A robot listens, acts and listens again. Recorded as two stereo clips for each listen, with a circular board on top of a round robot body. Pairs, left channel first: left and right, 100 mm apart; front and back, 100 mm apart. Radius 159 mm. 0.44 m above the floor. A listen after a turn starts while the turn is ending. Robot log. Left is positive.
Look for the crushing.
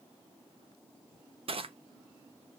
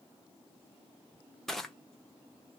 note: The crushing: 85° right.
cmd yaw -85
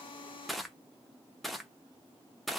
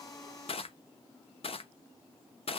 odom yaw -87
end: Found it: crushing, straight ahead, under 1 m away.